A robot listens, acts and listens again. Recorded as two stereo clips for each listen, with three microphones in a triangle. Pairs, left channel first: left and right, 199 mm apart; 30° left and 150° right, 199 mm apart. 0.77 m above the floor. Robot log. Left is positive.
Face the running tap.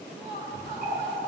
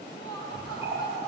note: The running tap: 135° left.
cmd yaw +135
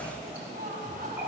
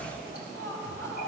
note: The running tap is now 10° right.
cmd yaw -10
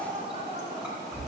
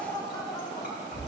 end: Facing the running tap, 2 to 4 m away.